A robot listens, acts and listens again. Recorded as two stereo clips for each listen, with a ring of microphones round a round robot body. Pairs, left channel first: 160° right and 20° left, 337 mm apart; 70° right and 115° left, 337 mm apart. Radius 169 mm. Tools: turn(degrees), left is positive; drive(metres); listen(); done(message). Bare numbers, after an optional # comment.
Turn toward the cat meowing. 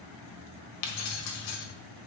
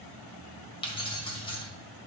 listen()
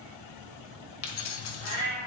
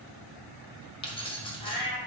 # The cat meowing: 55° right.
turn(-55)
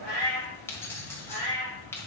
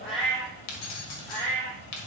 done("Facing the cat meowing.")